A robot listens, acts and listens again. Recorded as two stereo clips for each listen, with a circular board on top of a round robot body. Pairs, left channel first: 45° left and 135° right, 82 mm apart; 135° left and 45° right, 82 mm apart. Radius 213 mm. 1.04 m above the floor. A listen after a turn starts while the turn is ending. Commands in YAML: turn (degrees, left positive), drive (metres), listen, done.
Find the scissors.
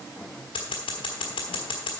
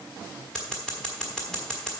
turn: 50
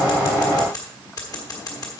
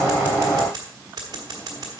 done: "Found it: scissors, straight ahead, 1 to 2 m away."